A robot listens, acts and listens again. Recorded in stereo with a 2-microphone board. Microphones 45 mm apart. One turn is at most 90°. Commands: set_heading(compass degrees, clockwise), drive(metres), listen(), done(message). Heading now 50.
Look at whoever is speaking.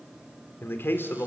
set_heading(350)
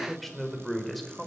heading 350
done("Found it: a man speaking, straight ahead, over 4 m away.")